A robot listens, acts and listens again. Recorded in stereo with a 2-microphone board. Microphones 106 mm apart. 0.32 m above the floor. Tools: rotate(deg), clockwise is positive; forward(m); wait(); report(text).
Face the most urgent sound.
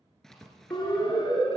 rotate(-45)
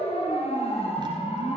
rotate(-80)
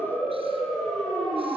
report("Facing the siren, over 4 m away.")